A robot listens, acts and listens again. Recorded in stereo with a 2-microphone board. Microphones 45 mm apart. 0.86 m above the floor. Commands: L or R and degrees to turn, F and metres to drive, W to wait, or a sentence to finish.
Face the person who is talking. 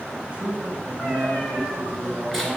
R25
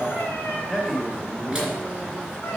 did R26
Facing the man speaking.